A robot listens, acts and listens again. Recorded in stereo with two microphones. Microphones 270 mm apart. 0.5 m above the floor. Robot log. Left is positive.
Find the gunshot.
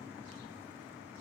cmd idle
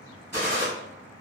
note: The gunshot: about 40° right or 140° right.
cmd yaw -40
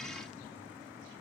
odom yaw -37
cmd idle
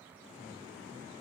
end: I heard a gunshot, but can't make it out now. It was about straight ahead or 105° right.